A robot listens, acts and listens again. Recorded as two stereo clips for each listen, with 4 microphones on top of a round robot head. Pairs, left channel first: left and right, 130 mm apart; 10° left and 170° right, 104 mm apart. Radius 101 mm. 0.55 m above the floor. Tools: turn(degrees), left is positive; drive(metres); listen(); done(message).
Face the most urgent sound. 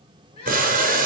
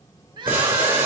turn(degrees=145)
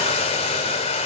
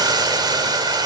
listen()
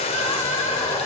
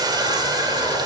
listen()
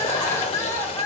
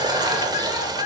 turn(degrees=20)
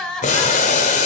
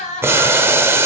done("Found it: crying, straight ahead.")